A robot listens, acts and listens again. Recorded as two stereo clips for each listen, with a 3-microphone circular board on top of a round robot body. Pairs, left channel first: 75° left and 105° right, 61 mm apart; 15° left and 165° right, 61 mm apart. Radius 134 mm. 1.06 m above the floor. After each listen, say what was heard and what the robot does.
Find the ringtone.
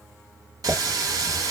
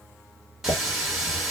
Keep listening.
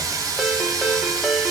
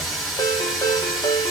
The ringtone: 15° right. Turn 15° right.
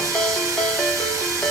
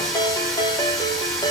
Found it: a ringtone, straight ahead.